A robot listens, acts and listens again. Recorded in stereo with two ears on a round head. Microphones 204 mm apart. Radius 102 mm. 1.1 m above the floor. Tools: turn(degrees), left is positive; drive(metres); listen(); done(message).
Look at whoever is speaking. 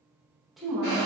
turn(degrees=30)
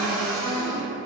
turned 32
turn(degrees=-30)
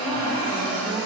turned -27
listen()
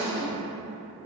done("Found it: a woman speaking, straight ahead, under 1 m away.")